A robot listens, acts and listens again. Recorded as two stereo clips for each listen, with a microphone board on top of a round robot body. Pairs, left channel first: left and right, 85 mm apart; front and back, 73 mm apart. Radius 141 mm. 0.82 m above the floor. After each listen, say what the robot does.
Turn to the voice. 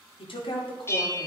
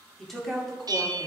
Turn 85° left.
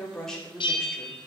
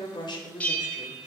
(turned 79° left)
Facing the woman speaking.